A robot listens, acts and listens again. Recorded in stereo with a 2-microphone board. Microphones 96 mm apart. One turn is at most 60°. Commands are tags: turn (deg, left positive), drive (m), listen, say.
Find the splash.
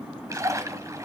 <turn deg="-30"/>
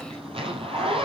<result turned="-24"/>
<listen/>
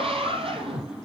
<say>I heard a splash, but can't make it out now. It was about 10° right or 125° right.</say>